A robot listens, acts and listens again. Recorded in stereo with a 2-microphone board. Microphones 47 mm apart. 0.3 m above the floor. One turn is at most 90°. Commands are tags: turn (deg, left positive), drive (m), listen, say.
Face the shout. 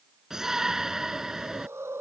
<turn deg="-30"/>
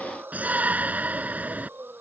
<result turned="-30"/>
<turn deg="-90"/>
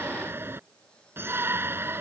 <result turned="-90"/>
<turn deg="-65"/>
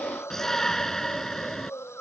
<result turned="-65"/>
<turn deg="10"/>
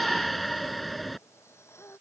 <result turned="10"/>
<say>Facing the shout.</say>